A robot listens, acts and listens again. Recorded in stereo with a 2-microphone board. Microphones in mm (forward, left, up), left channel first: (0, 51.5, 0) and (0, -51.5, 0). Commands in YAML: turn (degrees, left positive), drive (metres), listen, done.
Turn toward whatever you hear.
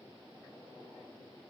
listen: true
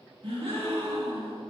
turn: -70
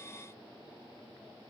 listen: true
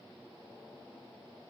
done: "I heard a gasp, but can't make it out now. It was about straight ahead or 40° right."